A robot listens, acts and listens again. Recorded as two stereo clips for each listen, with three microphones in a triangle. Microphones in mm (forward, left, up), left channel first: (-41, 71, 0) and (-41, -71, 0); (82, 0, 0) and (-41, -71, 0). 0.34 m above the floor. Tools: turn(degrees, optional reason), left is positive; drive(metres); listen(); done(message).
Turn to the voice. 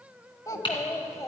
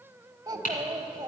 turn(degrees=155, reason="The child speaking: 155° left.")
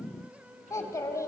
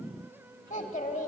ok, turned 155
turn(degrees=25, reason="The child speaking is now 25° left.")
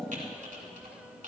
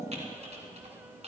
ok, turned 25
listen()
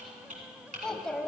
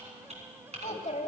done("Facing the child speaking.")